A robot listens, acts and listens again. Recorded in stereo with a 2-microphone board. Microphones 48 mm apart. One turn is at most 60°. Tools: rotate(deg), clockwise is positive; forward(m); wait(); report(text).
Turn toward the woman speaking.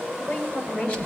rotate(-35)
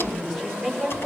rotate(-10)
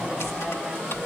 wait()
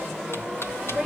report("Facing the woman speaking.")